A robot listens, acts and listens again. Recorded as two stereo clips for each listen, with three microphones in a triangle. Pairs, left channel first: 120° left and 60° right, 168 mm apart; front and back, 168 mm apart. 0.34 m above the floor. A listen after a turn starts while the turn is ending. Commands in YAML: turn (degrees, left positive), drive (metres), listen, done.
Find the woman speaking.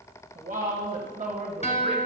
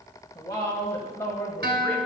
turn: -75
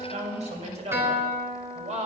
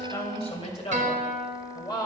turn: -60
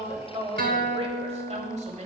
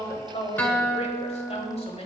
turn: -40
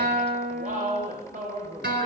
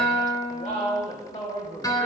turn: -40
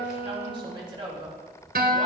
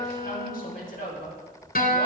done: "Facing the woman speaking."